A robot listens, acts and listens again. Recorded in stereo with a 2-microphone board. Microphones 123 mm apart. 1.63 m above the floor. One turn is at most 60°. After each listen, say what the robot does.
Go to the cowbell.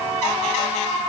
Keep listening.
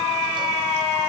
Keep listening.
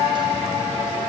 I can't make out a cowbell to turn to.